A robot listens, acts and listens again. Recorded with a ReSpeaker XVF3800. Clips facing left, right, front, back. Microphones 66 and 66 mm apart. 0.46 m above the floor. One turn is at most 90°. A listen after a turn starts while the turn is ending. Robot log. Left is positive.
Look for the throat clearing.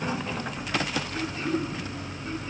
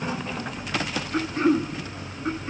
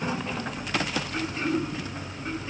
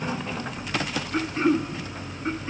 note: The throat clearing: 120° right.
cmd yaw -90
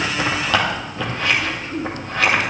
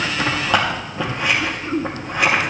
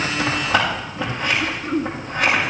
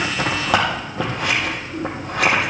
note: The throat clearing is now 30° right.
cmd yaw -30
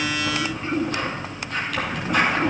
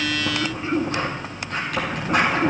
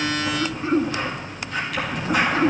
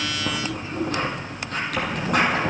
end: Found it: throat clearing, straight ahead, 1 to 2 m away.